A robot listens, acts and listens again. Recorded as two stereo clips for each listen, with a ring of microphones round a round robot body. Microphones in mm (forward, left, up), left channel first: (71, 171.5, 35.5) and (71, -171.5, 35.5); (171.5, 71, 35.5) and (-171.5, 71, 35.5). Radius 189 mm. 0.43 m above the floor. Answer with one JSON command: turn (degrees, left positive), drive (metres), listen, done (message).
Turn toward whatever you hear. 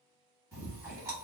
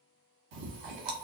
{"turn": -170}
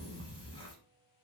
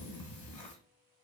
{"turn": 15}
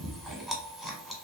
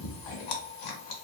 {"done": "Found it: chewing, straight ahead."}